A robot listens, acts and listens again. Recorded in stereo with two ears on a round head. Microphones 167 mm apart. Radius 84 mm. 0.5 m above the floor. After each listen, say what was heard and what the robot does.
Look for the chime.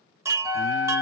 The chime: about 15° right or 165° right. Turn 15° right.
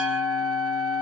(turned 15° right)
Keep listening.
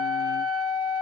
Keep listening.
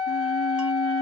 I heard a chime, but can't make it out now. It was about straight ahead or 150° right.